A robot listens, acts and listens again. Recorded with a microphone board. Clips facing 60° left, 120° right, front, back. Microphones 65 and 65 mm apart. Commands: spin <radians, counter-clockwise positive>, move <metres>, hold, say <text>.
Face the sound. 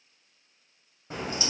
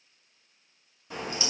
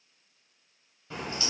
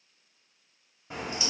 spin 1.92
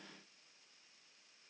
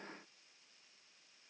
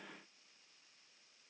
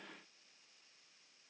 say I heard a crack from this way, but can't make it out now.